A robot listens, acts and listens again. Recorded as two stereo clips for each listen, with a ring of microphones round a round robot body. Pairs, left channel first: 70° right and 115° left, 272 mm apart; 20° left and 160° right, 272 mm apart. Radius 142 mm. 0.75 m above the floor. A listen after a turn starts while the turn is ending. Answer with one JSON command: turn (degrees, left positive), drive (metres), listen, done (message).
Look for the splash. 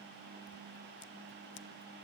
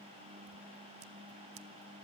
{"listen": true}
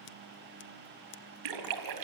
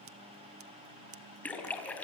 {"turn": 105}
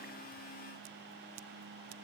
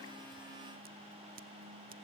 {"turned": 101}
{"done": "I heard a splash from this way, but can't make it out now."}